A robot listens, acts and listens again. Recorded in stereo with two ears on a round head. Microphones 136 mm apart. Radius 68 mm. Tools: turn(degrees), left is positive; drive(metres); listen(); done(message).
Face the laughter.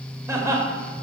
turn(degrees=-20)
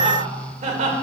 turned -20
turn(degrees=-130)
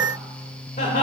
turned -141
turn(degrees=50)
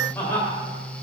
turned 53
turn(degrees=15)
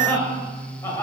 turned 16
turn(degrees=20)
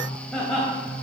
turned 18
done("Facing the laughter, 2 to 4 m away.")